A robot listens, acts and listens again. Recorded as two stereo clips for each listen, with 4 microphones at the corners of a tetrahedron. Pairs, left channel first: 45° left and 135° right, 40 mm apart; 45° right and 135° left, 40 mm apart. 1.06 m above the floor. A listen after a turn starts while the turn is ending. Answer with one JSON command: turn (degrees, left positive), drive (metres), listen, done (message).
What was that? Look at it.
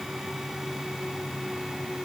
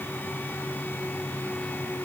{"listen": true}
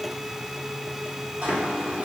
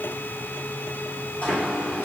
{"turn": -90}
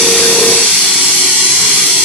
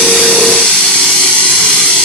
{"done": "Found it: a running tap, straight ahead, 1 to 2 m away."}